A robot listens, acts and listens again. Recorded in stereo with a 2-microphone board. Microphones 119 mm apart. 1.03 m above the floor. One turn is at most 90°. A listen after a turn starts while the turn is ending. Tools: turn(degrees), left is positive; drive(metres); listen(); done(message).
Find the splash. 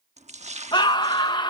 turn(degrees=-75)
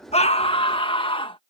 listen()
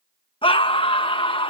done("I heard a splash, but can't make it out now. It was about straight ahead or 30° right.")